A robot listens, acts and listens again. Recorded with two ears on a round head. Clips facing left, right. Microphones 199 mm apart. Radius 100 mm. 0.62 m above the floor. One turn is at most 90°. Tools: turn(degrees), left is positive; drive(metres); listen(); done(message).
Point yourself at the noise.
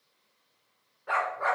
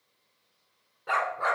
turn(degrees=-50)
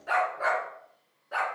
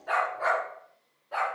turn(degrees=20)
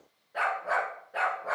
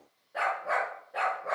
turn(degrees=10)
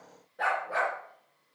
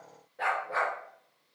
turn(degrees=10)
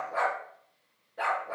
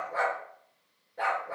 done("Found it: a dog barking, straight ahead.")